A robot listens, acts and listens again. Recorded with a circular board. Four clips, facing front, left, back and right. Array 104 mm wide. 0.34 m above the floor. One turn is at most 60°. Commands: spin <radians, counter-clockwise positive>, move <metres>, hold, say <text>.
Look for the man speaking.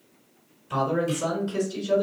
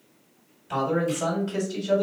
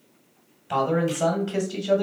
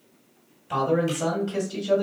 spin -1.05
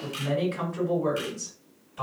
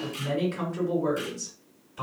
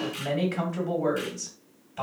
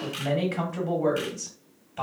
spin -1.05
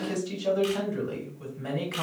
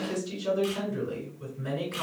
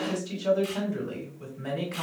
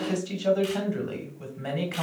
spin -1.05
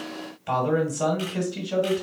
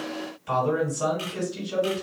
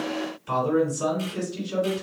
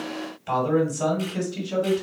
spin -0.35
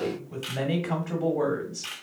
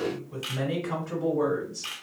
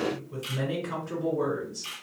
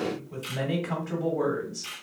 spin -0.17
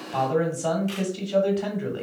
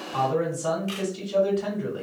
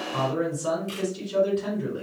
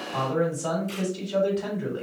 say Facing the man speaking.